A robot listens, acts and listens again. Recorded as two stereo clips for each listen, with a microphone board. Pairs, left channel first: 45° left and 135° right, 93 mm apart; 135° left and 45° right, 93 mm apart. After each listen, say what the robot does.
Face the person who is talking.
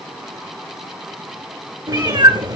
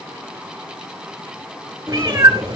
Keep listening.
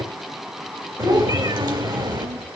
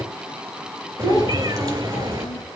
Turn 175° right.
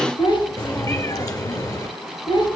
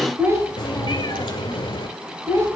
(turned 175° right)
Turn 15° left.
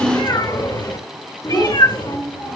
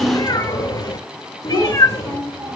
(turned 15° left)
Facing the child speaking, 2 to 4 m away.